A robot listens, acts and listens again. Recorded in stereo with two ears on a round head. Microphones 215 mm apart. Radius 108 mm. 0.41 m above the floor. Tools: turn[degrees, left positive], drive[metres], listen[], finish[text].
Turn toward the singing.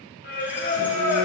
Thought: The singing: about 45° left or 135° left.
Action: turn[45]
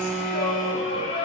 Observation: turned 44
Thought: So it is at 25° left.
Action: turn[25]
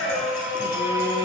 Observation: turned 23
Thought: The singing is now 10° right.
Action: turn[-10]
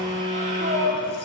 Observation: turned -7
Thought: The singing is now 35° right.
Action: turn[-35]
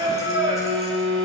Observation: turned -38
Thought: The singing is now 20° right.
Action: turn[-20]
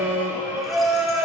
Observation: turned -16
Thought: The singing is now 10° right.
Action: turn[-10]
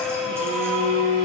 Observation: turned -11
Action: finish[Found it: singing, straight ahead, 2 to 4 m away.]